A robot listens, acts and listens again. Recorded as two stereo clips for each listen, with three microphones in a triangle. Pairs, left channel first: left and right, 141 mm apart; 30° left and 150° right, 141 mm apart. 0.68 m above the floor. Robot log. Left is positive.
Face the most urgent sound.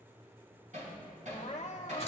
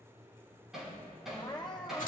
note: The crying: 80° left.
cmd yaw +80
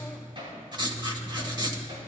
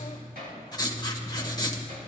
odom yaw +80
cmd idle
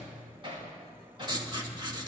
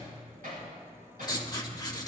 cmd idle
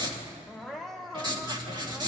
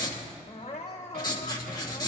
end: Found it: crying, straight ahead, 1 to 2 m away.